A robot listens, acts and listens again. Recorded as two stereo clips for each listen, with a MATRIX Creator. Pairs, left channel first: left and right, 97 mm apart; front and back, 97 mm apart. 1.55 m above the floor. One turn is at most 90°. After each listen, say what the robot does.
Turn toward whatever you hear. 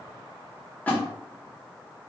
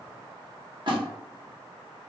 Turn 90° left.
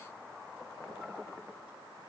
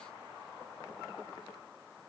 Turn 70° left.
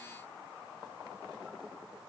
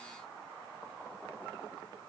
Facing where the splash came from. I can't hear it now.